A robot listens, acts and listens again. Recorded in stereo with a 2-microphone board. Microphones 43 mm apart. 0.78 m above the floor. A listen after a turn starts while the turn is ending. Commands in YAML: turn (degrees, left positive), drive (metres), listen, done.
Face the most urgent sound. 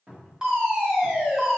turn: -20
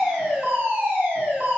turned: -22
turn: -135
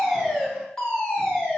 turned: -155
turn: 25
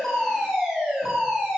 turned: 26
done: "Found it: a fire alarm, straight ahead, 2 to 4 m away."